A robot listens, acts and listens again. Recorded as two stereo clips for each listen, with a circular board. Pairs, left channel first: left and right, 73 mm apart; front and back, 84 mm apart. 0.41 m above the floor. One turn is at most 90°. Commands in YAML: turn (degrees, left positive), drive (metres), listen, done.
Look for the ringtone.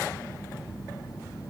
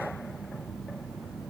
listen: true
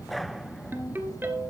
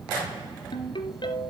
turn: -30
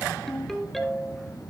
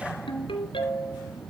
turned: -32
done: "Facing the ringtone, 2 to 4 m away."